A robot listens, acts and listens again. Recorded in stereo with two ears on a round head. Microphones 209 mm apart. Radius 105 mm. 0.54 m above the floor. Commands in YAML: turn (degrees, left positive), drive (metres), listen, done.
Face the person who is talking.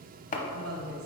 turn: -65
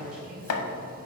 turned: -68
done: "Facing the woman speaking."